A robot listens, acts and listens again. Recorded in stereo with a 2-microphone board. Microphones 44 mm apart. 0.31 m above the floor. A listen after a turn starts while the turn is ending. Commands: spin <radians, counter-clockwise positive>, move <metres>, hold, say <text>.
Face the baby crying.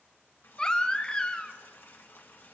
spin 0.35
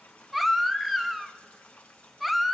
say Found it: a baby crying, straight ahead, under 1 m away.